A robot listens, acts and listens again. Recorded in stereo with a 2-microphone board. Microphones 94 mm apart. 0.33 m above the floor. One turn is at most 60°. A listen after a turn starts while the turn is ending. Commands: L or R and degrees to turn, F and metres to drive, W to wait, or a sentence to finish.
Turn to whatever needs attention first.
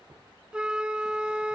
W
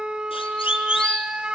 L60
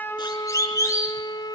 L35
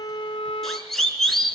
Found it: a siren, straight ahead, over 4 m away.